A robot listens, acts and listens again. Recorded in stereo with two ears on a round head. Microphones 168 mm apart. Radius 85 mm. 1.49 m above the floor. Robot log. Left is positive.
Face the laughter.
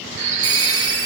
cmd idle
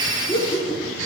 note: The laughter: about 30° left or 150° left.
cmd yaw +30
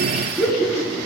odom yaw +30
end: Facing the laughter.